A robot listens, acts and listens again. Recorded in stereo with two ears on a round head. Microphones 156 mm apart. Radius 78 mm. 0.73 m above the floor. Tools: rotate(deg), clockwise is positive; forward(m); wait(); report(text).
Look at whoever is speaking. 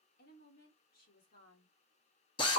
rotate(-60)
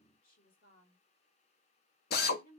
rotate(-55)
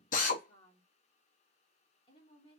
rotate(-30)
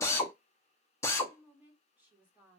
rotate(10)
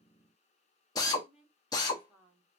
report("Facing the woman speaking, 1 to 2 m away.")